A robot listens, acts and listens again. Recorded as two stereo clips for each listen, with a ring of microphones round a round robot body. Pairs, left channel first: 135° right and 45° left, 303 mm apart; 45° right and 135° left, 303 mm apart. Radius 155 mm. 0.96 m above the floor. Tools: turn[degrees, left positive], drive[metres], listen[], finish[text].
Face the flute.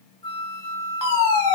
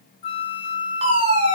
Thought: The flute: 60° right.
Action: turn[-60]
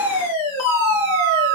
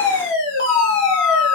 Action: finish[Found it: a flute, straight ahead, 1 to 2 m away.]